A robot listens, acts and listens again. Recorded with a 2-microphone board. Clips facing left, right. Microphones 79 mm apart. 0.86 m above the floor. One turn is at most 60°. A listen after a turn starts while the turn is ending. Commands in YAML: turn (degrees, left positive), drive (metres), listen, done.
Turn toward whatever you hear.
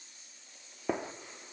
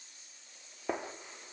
turn: -30
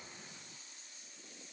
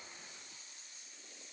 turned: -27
listen: true
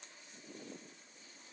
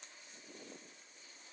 done: "I heard a gunshot, but can't make it out now. It was about 25° left or 150° right."